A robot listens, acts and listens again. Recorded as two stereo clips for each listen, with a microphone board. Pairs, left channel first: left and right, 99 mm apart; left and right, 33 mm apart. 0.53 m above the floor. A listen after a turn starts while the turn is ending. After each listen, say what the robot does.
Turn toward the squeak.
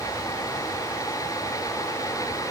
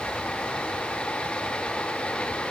Keep listening.
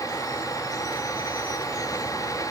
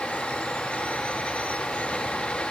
Keep listening.
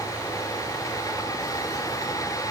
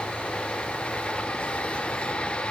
I can't make out a squeak.